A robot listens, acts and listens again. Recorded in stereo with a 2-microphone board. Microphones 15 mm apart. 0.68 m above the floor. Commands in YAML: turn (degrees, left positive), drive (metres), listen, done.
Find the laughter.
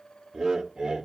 turn: -55
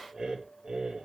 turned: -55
turn: -55
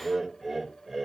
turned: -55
done: "Facing the laughter."